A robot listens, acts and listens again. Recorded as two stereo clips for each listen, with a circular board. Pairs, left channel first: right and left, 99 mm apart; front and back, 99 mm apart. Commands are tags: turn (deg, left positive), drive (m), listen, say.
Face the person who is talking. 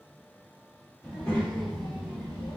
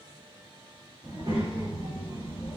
<turn deg="-175"/>
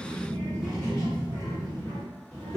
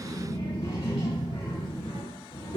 <say>Found it: a child speaking, straight ahead.</say>